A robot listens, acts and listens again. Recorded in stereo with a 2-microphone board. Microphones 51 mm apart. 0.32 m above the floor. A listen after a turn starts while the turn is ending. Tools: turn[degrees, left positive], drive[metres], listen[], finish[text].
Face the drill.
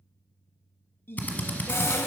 Thought: The drill: about 35° left or 145° left.
Action: turn[35]
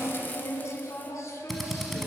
Action: finish[Facing the drill, under 1 m away.]